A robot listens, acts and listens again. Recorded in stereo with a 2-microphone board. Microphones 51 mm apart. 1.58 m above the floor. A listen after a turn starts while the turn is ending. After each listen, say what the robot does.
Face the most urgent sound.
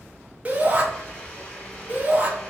Turn 35° right.
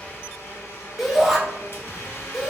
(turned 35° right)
Facing the shout.